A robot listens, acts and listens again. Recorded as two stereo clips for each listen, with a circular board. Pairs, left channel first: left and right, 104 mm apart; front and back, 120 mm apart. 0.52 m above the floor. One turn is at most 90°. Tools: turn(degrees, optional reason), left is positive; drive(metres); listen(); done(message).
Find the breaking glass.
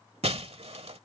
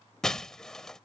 turn(degrees=-85, reason="The breaking glass: 85° right.")
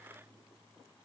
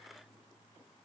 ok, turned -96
turn(degrees=10, reason="Nothing new. It was at 10° left.")
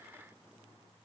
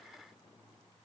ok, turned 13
done("Facing where the breaking glass came from. I can't hear it now.")